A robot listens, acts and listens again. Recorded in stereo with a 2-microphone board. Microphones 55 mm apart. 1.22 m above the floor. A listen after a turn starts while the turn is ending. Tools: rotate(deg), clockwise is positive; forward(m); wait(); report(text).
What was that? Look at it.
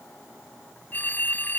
rotate(-35)
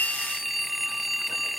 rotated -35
report("Facing the phone ringing.")